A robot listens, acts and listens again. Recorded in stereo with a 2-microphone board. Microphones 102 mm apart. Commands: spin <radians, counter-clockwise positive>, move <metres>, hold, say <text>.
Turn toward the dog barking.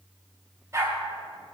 spin -0.52
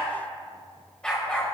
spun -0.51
spin 0.17
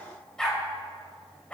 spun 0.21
spin 0.26
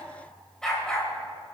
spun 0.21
spin 0.17
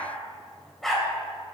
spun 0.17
say Found it: a dog barking, straight ahead, 2 to 4 m away.